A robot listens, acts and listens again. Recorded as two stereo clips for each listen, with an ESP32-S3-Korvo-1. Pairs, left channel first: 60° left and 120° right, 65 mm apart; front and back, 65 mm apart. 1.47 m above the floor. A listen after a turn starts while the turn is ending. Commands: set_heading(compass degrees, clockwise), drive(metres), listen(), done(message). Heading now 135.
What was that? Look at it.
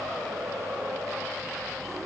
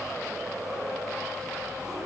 listen()
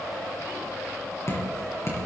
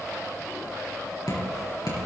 set_heading(120)
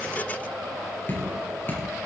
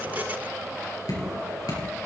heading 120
done("Found it: dripping, straight ahead, over 4 m away.")